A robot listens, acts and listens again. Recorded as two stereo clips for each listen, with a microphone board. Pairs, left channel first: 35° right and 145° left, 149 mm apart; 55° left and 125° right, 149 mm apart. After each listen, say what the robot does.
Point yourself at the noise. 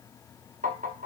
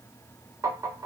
Turn 165° left.
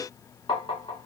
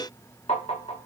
Turn 20° left.
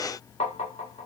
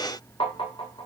Facing the tapping, 1 to 2 m away.